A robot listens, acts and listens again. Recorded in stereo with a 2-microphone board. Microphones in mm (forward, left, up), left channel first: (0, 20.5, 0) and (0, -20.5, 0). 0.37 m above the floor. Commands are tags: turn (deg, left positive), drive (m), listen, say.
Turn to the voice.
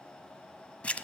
<listen/>
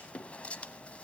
<listen/>
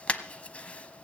<say>I can't make out anyone speaking to turn to.</say>